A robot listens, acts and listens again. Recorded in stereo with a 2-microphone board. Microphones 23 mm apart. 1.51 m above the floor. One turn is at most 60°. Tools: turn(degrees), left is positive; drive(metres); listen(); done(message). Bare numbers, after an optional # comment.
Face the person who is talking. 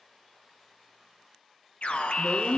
# The woman speaking: about 50° left or 130° left.
turn(50)
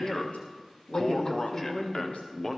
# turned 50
# So it is at 80° left.
turn(60)
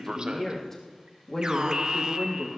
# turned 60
# The woman speaking is now 20° left.
turn(20)
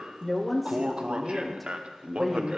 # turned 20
done("Facing the woman speaking.")